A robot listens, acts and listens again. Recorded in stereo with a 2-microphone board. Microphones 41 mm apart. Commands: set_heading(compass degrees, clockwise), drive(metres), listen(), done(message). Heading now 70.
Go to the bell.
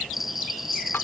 set_heading(100)
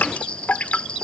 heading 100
set_heading(75)
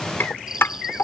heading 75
set_heading(90)
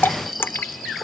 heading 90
drive(1.0)
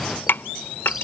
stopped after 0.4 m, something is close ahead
listen()
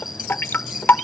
set_heading(100)
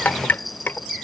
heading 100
done("Blocked. The bell is further on, straight ahead.")